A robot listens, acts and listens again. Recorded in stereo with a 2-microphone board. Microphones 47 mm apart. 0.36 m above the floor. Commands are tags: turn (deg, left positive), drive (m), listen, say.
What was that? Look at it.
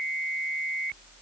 <listen/>
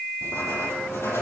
<turn deg="70"/>
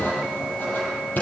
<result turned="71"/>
<turn deg="35"/>
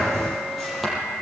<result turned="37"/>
<say>Found it: writing, straight ahead, over 4 m away.</say>